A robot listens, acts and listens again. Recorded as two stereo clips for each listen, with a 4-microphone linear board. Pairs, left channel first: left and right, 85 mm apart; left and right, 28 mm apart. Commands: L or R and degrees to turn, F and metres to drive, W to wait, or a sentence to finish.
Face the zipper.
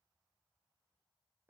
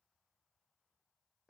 W
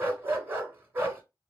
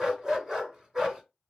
W
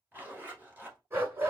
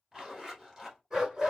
R20
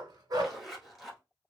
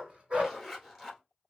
Found it: a zipper, straight ahead, 1 to 2 m away.